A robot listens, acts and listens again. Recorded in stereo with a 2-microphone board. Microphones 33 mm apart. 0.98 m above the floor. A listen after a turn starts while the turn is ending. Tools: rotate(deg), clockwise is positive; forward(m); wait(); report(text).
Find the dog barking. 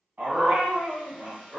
rotate(70)
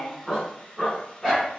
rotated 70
report("Facing the dog barking, 2 to 4 m away.")